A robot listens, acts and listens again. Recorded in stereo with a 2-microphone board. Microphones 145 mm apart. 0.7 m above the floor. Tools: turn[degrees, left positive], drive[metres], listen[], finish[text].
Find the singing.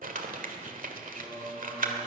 Action: turn[-90]
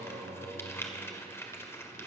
Thought: So it is at 10° right.
Action: turn[-10]
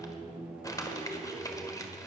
Action: finish[Facing the singing, over 4 m away.]